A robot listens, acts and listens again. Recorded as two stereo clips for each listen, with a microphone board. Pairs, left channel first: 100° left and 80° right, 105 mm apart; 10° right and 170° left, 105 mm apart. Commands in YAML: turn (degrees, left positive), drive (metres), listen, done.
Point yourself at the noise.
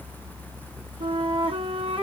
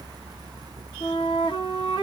turn: -50
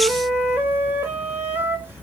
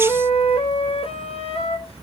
turn: -10
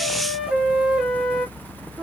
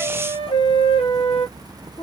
done: "Found it: a flute, straight ahead, under 1 m away."